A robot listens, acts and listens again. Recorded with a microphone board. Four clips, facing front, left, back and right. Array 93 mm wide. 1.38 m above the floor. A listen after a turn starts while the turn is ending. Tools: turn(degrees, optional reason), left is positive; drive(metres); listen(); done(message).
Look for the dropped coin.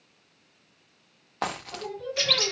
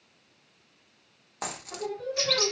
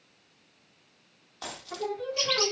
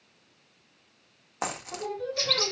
turn(degrees=-25, reason="The dropped coin: 25° right.")
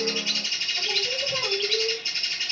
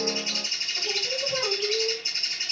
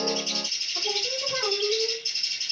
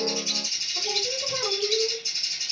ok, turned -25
done("Facing where the dropped coin came from. I can't hear it now.")